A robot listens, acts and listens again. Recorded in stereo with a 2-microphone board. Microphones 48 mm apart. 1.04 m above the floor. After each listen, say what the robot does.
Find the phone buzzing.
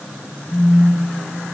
Turn 70° left.
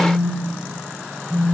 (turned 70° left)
Facing the phone buzzing, 1 to 2 m away.